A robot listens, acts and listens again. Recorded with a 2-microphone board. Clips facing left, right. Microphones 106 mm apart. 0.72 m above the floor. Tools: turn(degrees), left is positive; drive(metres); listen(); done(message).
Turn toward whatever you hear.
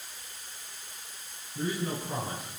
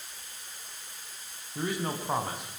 turn(degrees=-70)
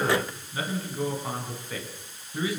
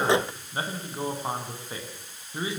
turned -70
turn(degrees=-25)
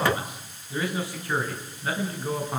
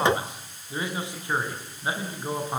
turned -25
turn(degrees=-20)
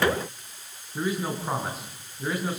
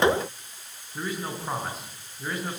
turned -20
done("Facing the man speaking.")